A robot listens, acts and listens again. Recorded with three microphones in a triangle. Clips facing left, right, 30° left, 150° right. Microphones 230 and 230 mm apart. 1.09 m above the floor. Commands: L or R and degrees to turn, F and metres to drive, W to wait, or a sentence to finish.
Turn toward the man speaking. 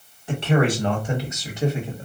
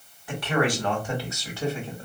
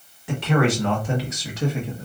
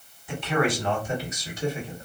L15
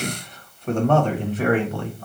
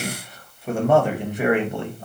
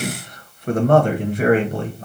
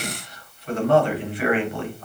R25
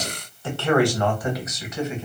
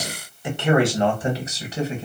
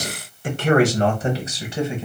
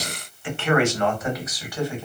R40
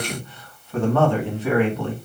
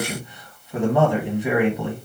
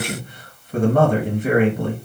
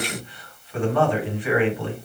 R15
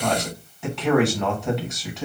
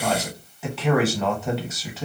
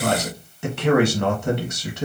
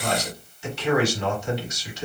Found it: a man speaking, straight ahead.